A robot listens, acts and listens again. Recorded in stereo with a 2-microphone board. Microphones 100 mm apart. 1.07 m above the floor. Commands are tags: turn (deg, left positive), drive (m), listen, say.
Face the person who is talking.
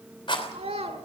<turn deg="-90"/>
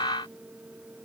<listen/>
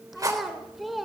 <say>Facing the child speaking, 2 to 4 m away.</say>